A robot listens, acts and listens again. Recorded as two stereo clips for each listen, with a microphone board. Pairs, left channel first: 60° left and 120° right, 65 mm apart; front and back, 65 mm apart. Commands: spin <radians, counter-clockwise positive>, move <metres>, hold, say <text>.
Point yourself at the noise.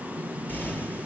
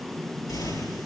say Facing the explosion.